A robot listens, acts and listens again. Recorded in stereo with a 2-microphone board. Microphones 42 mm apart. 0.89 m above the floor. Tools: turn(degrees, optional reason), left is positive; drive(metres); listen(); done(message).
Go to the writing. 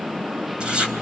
turn(degrees=-20, reason="The writing: about 20° right or 160° right.")
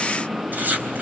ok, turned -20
turn(degrees=-135, reason="So it is at 135° right.")
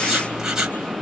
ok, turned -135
turn(degrees=-15, reason="The writing is now 15° right.")
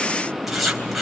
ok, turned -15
drive(metres=1.0)
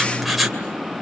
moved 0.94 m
drive(metres=1.0)
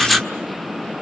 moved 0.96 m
drive(metres=1.0)
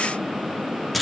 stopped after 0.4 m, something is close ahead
done("Arrived at the writing, straight ahead.")